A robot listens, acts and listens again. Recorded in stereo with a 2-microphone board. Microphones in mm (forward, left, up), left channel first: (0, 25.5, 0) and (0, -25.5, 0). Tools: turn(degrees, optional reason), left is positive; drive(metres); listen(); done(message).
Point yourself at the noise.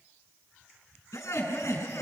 turn(degrees=70, reason="The laughter: about 70° left or 110° left.")
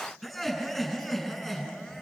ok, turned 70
done("Found it: laughter, straight ahead, over 4 m away.")